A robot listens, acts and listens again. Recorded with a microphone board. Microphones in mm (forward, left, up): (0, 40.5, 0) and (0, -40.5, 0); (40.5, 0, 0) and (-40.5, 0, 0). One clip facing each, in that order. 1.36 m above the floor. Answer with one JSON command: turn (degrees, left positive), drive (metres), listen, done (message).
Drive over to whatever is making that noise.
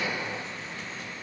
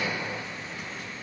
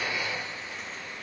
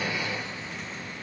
{"listen": true}
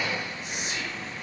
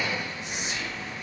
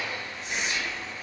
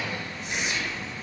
{"turn": -100}
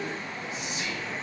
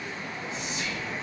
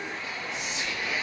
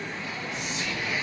{"turn": 15}
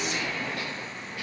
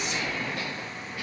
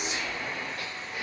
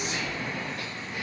{"drive": 1.0}
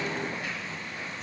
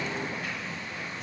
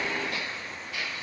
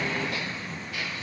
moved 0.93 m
{"listen": true}
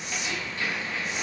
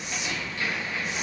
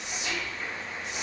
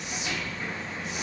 {"drive": 1.0}
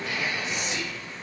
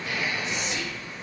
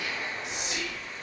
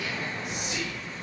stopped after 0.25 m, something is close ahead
{"done": "Arrived at the whispering, straight ahead."}